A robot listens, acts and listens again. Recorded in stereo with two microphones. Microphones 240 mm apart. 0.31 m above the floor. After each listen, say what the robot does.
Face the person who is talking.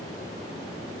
Keep listening.
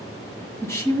Turn 30° left.
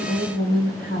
Turn 135° left.
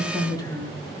Turn 20° left.
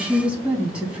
Facing the woman speaking, 2 to 4 m away.